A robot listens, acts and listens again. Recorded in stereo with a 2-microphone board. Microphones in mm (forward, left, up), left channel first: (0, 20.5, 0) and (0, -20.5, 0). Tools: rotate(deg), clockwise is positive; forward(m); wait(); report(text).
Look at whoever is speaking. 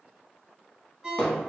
wait()
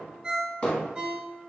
wait()
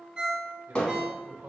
rotate(70)
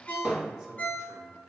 report("Found it: a man speaking, straight ahead, 1 to 2 m away.")